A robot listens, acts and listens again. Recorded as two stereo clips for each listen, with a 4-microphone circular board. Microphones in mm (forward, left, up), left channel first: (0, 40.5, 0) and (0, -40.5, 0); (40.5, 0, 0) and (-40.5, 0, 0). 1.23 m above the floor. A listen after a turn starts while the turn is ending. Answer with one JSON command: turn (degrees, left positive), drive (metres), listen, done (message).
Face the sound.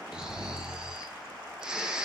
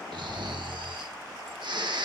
{"turn": -170}
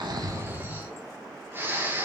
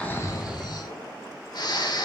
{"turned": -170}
{"turn": -30}
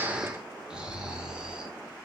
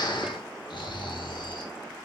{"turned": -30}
{"turn": -10}
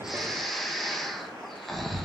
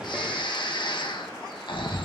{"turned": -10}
{"done": "Facing the snoring, 1 to 2 m away."}